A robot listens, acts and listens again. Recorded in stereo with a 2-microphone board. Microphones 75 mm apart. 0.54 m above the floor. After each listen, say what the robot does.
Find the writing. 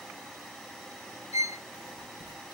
Turn 90° right.
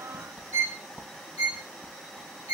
Turn 15° right.
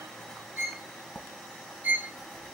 Facing the writing.